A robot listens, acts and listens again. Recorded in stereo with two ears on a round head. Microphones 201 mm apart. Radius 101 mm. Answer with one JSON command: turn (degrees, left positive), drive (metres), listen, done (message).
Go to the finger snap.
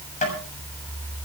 {"listen": true}
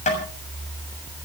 {"listen": true}
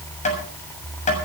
{"done": "I can't make out a finger snap to turn to."}